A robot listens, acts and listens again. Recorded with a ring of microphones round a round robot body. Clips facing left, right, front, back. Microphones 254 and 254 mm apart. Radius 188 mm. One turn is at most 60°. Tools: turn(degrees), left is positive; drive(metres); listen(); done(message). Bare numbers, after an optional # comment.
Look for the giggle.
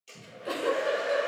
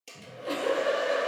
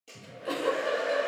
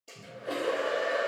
# The giggle: 15° left.
turn(15)
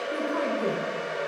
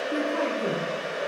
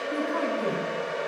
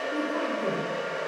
listen()
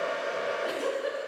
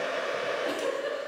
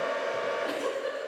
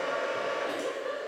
done("Facing the giggle.")